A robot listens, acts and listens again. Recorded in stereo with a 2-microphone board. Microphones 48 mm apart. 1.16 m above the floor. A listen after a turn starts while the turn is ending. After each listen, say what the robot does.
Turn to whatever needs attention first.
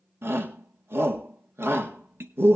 Turn 60° right.
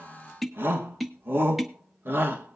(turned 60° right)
Turn 55° right.
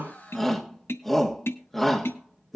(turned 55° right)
Found it: a shout, straight ahead.